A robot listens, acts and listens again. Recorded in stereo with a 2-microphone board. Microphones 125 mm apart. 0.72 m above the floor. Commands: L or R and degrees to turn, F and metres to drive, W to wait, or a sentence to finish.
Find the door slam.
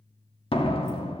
L45
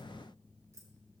W
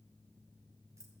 I heard a door slam, but can't make it out now. It was about straight ahead or 90° left.